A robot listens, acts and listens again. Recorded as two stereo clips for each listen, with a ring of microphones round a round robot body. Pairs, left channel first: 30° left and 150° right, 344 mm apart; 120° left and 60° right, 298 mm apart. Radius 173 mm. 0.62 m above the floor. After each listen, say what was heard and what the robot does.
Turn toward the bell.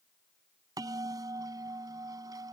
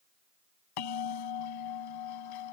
The bell: 130° left. Turn 130° left.
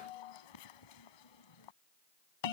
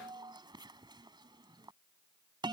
The bell is now 15° left. Turn 15° left.
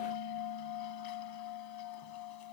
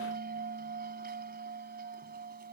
Found it: a bell, straight ahead.